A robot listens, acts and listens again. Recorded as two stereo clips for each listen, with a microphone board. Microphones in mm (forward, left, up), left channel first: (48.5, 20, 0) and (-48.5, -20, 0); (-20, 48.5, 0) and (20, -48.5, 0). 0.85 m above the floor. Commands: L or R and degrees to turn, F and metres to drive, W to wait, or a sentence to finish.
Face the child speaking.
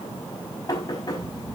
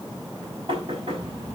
R110
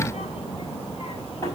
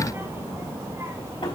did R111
Facing the child speaking.